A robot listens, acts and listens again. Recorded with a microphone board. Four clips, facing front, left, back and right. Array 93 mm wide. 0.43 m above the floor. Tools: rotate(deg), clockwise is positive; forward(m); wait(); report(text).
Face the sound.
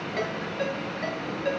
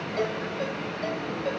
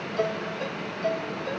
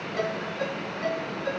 report("Facing the ringtone.")